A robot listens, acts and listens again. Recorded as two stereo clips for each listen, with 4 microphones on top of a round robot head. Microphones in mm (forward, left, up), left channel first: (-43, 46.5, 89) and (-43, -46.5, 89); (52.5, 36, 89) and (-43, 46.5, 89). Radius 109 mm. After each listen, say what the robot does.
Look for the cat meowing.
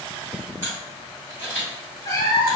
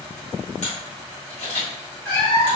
Turn 20° left.
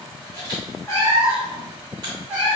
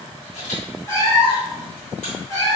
Turn 35° right.
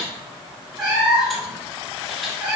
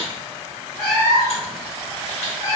Turn 35° right.
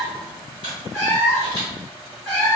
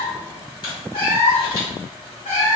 Found it: a cat meowing, straight ahead, 1 to 2 m away.